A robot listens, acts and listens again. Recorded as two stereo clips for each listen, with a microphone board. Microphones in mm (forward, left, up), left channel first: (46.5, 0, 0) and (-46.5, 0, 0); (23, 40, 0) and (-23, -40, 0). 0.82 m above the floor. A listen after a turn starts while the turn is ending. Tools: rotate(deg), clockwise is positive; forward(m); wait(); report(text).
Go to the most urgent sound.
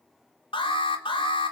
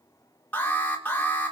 rotate(10)
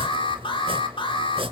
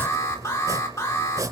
forward(1.0)
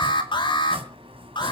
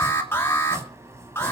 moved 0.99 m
forward(1.0)
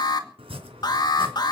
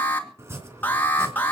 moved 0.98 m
forward(1.0)
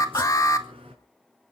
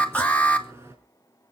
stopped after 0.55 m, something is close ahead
report("Arrived at the alarm, straight ahead.")